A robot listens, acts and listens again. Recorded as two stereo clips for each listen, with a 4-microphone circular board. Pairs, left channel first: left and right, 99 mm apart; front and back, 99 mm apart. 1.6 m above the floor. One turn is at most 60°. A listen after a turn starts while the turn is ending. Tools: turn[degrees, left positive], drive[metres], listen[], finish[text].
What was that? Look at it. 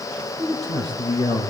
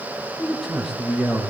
Thought: The man speaking: 95° left.
Action: turn[60]
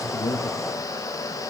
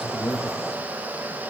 Thought: Nothing new. It was at 35° left.
Action: turn[35]
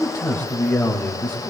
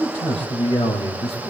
Thought: The man speaking is now 20° left.
Action: turn[20]
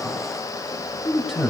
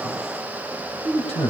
Action: finish[Facing the man speaking, 1 to 2 m away.]